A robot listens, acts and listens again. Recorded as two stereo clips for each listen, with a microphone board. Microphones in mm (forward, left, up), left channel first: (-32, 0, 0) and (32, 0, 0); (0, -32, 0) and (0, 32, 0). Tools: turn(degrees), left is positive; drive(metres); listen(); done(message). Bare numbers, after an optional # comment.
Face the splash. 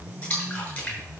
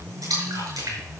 # The splash: 110° left.
turn(110)
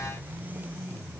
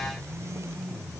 done("Facing where the splash came from. I can't hear it now.")